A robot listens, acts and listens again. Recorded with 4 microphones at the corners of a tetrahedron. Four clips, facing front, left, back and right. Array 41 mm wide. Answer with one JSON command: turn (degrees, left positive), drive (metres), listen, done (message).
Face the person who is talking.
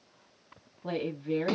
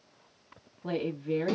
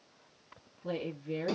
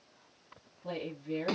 {"turn": 45}
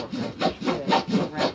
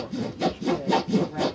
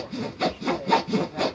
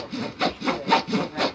{"turn": -10}
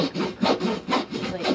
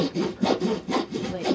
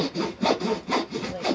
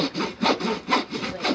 {"done": "Found it: a woman speaking, straight ahead."}